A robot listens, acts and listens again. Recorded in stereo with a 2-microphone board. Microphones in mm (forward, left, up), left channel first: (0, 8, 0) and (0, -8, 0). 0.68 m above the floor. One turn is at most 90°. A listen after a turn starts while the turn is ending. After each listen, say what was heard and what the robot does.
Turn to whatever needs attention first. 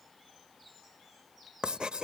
Keep listening.
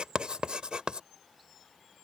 Keep listening.
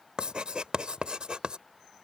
I can't make out anything urgent, only writing.